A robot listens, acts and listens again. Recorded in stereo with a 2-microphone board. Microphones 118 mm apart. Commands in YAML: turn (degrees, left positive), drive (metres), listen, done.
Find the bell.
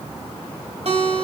listen: true
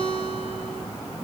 listen: true
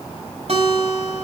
done: "I can't make out a bell, only a guitar."